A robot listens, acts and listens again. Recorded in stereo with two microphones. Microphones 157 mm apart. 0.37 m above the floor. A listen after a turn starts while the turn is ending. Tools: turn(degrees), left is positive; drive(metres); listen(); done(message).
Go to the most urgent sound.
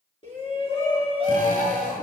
turn(degrees=35)
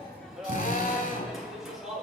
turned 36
drive(metres=1.0)
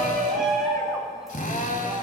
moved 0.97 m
drive(metres=1.0)
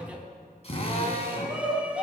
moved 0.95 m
turn(degrees=-10)
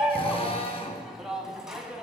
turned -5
drive(metres=1.0)
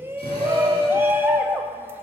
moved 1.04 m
turn(degrees=-20)
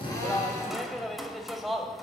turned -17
drive(metres=1.0)
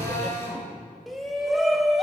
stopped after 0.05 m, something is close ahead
done("Arrived at the shout, straight ahead.")